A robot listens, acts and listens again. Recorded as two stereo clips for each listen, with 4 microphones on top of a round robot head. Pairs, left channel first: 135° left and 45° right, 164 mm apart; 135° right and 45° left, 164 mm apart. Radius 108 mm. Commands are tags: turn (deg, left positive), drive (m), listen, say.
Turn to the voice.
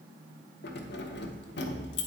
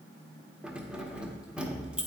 <listen/>
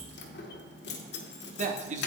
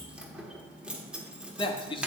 <turn deg="-80"/>
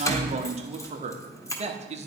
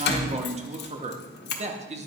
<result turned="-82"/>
<say>Found it: a man speaking, straight ahead.</say>